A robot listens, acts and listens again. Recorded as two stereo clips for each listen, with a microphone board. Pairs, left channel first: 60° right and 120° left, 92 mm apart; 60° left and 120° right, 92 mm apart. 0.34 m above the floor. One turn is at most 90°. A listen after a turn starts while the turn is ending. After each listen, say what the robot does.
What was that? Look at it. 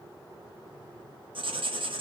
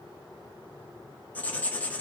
Turn 90° left.
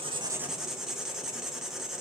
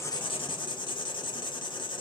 Turn 35° left.
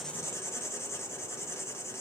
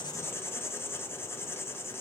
Facing the writing.